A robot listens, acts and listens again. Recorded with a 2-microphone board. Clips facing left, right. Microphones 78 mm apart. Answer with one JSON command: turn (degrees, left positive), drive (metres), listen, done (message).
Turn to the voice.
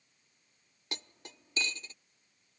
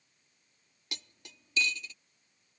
{"listen": true}
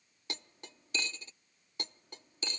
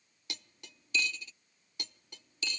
{"listen": true}
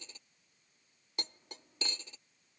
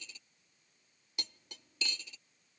{"done": "I can't make out anyone speaking to turn to."}